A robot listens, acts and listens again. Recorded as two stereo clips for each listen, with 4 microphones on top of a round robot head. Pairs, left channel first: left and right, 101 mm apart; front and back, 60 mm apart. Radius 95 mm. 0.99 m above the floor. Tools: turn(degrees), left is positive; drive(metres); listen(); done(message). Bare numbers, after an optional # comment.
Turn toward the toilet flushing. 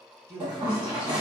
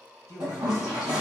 # The toilet flushing: 130° right.
turn(-130)
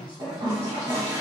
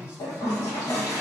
# The toilet flushing is now 20° right.
turn(-20)
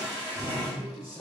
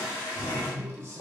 done("Found it: a toilet flushing, straight ahead.")